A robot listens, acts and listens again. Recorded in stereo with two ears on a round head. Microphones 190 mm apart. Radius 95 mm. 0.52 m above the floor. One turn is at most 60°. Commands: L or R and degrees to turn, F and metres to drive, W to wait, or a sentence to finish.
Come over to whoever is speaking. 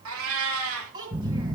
R20
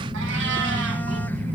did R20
W
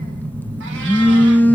W
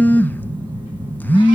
I heard a child speaking, but can't make it out now. It was about straight ahead or 140° right. I did not reach it.